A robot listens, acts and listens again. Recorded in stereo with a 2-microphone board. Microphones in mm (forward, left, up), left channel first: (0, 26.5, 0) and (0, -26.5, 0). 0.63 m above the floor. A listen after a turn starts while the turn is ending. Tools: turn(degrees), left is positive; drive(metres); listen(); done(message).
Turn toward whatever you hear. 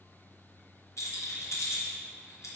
turn(degrees=90)
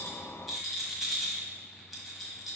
done("Facing the rattle.")